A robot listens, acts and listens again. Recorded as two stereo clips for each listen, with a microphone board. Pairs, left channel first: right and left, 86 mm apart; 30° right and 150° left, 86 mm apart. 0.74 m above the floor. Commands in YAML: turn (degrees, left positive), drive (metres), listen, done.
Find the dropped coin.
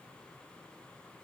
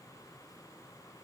listen: true
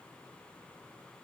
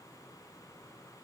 listen: true
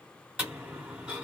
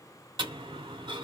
turn: 165
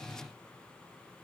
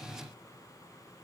done: "I heard a dropped coin from this way, but can't make it out now."